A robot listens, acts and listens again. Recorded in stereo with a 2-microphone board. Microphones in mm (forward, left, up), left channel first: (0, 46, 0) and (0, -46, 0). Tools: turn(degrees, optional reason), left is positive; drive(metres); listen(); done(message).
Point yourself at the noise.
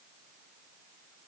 listen()
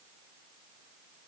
listen()
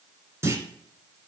turn(degrees=-30, reason="The clunk: about 30° right or 150° right.")
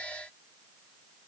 listen()
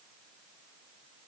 done("I heard a clunk, but can't make it out now. It was about straight ahead or 120° right.")